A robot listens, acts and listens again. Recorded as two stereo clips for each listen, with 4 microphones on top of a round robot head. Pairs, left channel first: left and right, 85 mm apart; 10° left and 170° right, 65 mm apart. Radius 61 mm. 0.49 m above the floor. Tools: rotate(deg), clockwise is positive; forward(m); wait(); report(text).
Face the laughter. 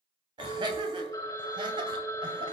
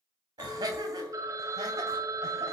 rotate(135)
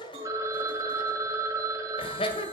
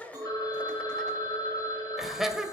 rotate(-105)
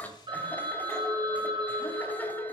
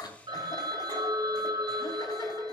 rotate(-15)
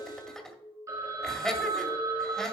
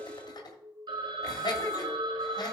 report("Found it: laughter, straight ahead.")